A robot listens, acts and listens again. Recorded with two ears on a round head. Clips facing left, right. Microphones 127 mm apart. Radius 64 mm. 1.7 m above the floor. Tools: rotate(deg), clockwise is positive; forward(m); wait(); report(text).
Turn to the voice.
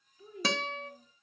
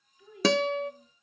rotate(-30)
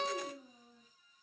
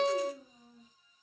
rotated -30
report("Found it: a child speaking, straight ahead, 2 to 4 m away.")